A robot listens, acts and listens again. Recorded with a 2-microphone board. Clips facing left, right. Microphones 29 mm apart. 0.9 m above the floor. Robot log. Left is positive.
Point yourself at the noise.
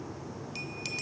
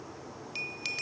note: The bell: about 20° right or 160° right.
cmd yaw -20
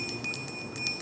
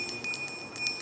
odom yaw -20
end: Facing the bell.